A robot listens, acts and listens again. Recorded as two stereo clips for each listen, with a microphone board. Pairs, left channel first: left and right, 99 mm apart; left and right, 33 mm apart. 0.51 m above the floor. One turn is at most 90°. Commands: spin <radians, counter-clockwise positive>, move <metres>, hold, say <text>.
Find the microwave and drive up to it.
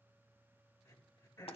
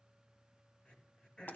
hold
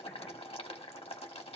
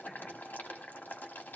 hold
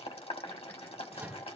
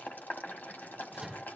spin -0.35
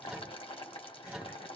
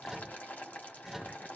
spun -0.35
move 1.0
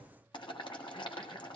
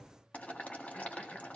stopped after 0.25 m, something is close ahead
hold
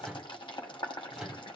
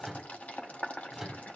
say Blocked. The microwave is further on, straight ahead.